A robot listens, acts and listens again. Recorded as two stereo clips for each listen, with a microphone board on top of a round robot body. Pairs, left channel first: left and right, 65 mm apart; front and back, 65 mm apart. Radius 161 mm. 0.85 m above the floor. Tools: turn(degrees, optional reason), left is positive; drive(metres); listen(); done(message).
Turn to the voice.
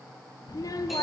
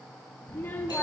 turn(degrees=60, reason="The child speaking: 60° left.")
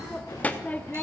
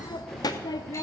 turn(degrees=20, reason="The child speaking is now 20° left.")
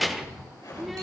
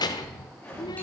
done("Facing the child speaking.")